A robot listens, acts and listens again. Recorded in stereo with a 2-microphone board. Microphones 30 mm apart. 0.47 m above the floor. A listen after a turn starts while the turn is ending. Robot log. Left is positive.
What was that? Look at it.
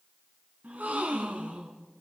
note: The gasp: about 65° right or 115° right.
cmd yaw -65
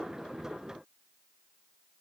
cmd idle
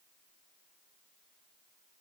end: I heard a gasp, but can't make it out now. It was about straight ahead or 50° right.